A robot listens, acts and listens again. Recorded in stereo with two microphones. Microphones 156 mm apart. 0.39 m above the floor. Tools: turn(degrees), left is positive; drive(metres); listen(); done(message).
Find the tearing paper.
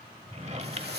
turn(degrees=-90)
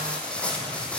done("Found it: tearing paper, straight ahead, 2 to 4 m away.")